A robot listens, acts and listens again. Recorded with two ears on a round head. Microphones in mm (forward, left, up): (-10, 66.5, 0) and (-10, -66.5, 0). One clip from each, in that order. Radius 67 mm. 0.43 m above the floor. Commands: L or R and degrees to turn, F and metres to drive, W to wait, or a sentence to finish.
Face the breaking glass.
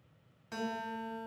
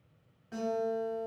W
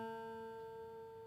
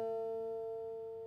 W
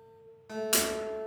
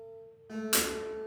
L30
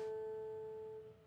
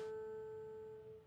W
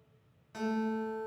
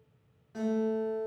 I heard breaking glass, but can't make it out now. It was about 30° right or 150° left.